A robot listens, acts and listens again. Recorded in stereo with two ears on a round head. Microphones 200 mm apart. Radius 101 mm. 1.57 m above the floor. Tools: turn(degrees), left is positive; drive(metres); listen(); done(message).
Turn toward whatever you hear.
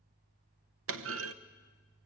turn(degrees=-70)
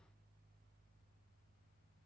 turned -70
listen()
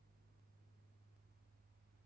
done("I heard a clunk, but can't make it out now. It was about straight ahead or 40° right.")